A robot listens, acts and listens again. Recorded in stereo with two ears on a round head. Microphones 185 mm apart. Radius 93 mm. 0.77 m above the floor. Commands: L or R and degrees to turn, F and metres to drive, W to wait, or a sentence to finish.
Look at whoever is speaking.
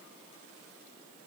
W
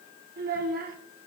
R45
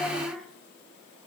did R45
Facing the child speaking, 1 to 2 m away.